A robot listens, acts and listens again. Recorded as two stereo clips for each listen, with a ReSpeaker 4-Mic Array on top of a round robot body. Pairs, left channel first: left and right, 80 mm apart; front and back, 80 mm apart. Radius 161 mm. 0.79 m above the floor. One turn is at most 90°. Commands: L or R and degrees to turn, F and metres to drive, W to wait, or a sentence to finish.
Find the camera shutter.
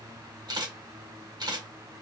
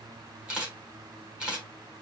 R90
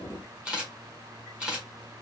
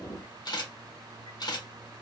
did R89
R15
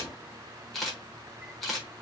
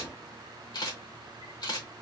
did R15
Facing the camera shutter.